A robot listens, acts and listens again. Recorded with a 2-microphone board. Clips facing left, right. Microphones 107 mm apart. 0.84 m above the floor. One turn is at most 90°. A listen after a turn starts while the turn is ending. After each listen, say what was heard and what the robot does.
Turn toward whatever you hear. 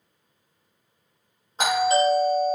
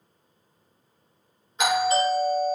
The doorbell: about 35° left or 145° left. Turn 35° left.
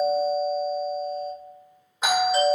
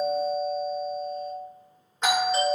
So it is at 10° left. Turn 10° left.
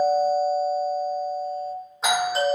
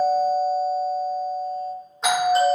Found it: a doorbell, straight ahead, 1 to 2 m away.